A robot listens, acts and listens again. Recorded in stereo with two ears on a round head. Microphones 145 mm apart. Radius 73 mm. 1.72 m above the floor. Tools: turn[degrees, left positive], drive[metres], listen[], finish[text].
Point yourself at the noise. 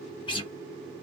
Thought: The guitar: about 30° left or 150° left.
Action: turn[30]
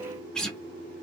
Action: finish[Facing the guitar.]